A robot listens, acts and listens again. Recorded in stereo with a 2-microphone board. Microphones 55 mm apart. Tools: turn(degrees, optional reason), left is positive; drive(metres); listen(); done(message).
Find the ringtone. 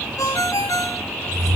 turn(degrees=90)
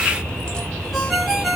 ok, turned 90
done("Found it: a ringtone, straight ahead, 1 to 2 m away.")